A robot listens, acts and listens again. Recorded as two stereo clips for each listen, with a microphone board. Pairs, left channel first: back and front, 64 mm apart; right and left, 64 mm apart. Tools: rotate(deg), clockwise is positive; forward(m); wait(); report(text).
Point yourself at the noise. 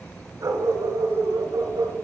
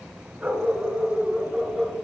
report("Facing the dog barking, 1 to 2 m away.")